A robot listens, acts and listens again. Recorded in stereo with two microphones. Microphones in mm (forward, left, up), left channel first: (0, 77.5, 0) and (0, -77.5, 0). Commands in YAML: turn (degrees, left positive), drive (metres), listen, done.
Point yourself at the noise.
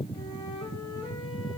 turn: 25
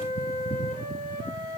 turn: 130
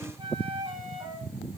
turn: -30
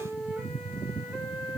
done: "Found it: a flute, straight ahead."